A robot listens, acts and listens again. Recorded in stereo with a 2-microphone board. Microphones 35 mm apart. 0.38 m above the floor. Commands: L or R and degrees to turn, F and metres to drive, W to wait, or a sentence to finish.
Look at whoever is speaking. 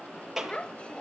L35
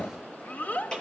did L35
L105
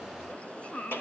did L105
L40
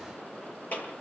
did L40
W
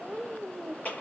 Facing the child speaking.